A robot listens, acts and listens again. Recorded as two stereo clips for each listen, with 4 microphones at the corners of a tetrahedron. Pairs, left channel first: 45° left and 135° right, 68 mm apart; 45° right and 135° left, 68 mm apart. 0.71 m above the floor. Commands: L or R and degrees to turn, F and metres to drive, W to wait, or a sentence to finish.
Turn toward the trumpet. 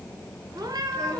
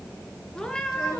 W
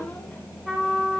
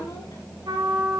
L140
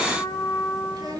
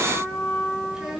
L20
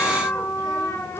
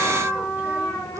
Facing the trumpet, 2 to 4 m away.